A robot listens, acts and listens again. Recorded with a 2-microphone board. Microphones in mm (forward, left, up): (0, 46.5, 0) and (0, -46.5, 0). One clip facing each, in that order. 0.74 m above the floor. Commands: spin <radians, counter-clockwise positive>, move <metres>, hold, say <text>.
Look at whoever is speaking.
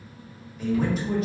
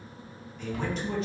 spin 0.52
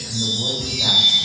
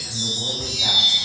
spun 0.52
spin 2.53
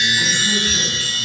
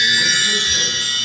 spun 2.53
hold
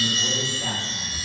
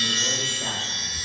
hold
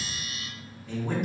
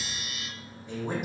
spin -0.35
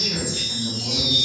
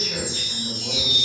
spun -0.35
say Facing the man speaking, under 1 m away.